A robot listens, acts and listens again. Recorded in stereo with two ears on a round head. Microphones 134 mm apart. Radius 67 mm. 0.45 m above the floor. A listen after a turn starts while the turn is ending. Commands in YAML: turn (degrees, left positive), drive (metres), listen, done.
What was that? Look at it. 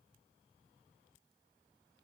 listen: true
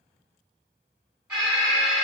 turn: -30
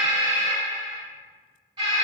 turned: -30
turn: -145
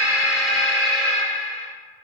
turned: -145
turn: 10
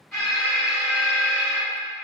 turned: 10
done: "Facing the alarm."